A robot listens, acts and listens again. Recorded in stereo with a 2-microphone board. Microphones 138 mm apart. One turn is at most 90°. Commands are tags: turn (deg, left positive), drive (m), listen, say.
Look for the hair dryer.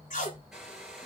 <turn deg="-30"/>
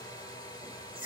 <turn deg="30"/>
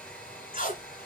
<turn deg="10"/>
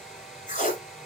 <say>Found it: a hair dryer, straight ahead, 2 to 4 m away.</say>